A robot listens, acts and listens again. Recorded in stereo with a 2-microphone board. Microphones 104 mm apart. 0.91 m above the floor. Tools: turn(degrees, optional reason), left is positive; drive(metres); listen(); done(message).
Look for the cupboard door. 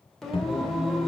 turn(degrees=60, reason="The cupboard door: about 60° left or 120° left.")
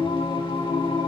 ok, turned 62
listen()
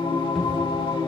listen()
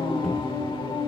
done("I heard a cupboard door, but can't make it out now. It was about 5° right or 60° left.")